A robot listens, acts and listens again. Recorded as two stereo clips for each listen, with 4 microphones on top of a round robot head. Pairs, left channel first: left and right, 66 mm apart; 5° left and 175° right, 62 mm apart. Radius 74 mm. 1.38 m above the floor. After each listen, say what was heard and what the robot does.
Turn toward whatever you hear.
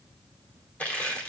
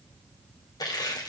The crushing: 20° left. Turn 20° left.
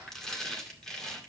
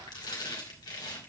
The crushing is now 10° left. Turn 10° left.
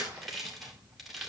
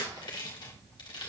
Facing the crushing.